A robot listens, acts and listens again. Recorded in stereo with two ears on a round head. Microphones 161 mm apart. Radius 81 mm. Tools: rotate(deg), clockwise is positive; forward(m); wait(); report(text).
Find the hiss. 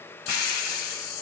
rotate(-55)
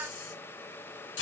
rotate(-65)
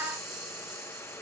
report("Found it: a hiss, straight ahead, under 1 m away.")